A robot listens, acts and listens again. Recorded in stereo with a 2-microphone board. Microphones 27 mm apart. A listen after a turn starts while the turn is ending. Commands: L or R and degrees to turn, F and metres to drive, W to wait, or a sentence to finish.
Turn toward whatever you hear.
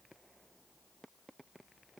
W
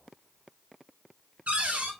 R55
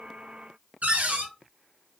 R70
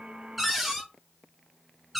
Facing the cupboard door.